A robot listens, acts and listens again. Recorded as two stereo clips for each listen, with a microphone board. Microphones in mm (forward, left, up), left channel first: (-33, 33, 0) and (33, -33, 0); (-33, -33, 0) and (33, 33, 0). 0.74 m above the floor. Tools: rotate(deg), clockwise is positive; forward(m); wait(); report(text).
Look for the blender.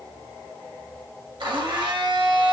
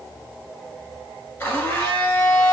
rotate(65)
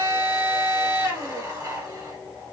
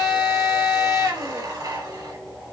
rotate(-10)
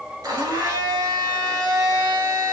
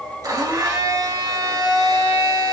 report("Found it: a blender, straight ahead, 1 to 2 m away.")